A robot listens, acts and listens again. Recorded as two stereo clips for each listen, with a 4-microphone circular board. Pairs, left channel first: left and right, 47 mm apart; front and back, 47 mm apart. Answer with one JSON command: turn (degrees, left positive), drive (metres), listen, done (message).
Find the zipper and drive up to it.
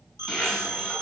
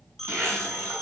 {"turn": -175}
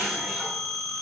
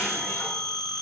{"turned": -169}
{"drive": 1.0}
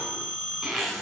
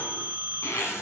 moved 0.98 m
{"drive": 1.0}
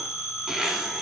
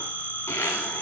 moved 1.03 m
{"drive": 1.0}
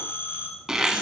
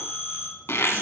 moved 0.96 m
{"turn": -10}
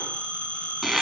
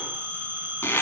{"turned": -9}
{"drive": 1.0}
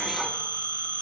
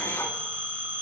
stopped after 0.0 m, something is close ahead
{"listen": true}
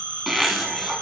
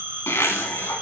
{"done": "I am next to the zipper."}